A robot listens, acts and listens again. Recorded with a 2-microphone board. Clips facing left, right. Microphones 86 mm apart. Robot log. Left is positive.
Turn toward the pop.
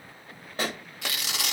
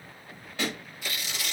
note: The pop: about 40° left or 140° left.
cmd yaw +40
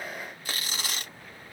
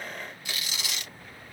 cmd idle
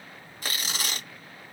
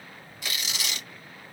end: I heard a pop, but can't make it out now. It was about straight ahead or 100° left.